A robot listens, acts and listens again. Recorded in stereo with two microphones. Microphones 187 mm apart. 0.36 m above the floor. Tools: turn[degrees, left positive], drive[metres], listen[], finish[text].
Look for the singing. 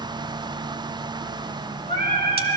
Thought: The singing: about 55° right or 125° right.
Action: turn[-55]
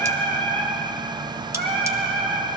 Thought: So it is at 75° right.
Action: turn[-75]
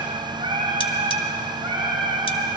Thought: The singing is now 30° right.
Action: turn[-30]
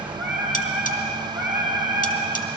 Thought: The singing is now 10° right.
Action: turn[-10]
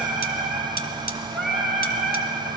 Action: finish[Found it: singing, straight ahead.]